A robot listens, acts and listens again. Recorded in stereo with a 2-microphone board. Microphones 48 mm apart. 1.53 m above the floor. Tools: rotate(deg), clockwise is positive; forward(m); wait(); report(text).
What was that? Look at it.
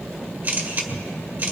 rotate(45)
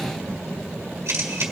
rotate(90)
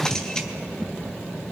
wait()
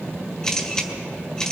rotate(-15)
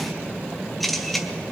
report("Facing the camera shutter.")